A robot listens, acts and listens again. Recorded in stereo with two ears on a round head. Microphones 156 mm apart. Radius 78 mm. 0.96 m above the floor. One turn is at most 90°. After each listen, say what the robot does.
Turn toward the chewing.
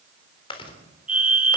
Turn 30° left.
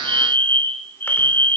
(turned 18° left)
Keep listening.
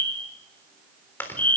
Turn 10° left.
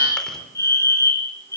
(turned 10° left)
Keep listening.
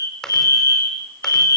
Facing the chewing.